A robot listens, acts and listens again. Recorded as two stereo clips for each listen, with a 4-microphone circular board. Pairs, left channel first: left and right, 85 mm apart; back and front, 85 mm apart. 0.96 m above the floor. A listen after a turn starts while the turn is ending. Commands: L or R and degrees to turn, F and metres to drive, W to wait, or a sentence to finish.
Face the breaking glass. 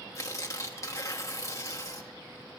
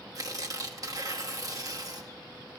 W
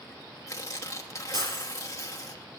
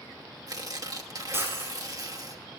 R65
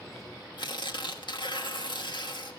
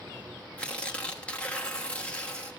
Facing where the breaking glass came from. I can't hear it now.